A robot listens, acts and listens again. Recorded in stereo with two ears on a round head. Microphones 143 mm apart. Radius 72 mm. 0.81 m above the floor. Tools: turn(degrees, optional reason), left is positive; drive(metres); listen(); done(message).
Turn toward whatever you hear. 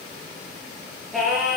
turn(degrees=30)
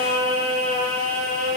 turn(degrees=-40, reason="So it is at 40° right.")
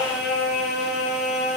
done("Found it: singing, straight ahead, over 4 m away.")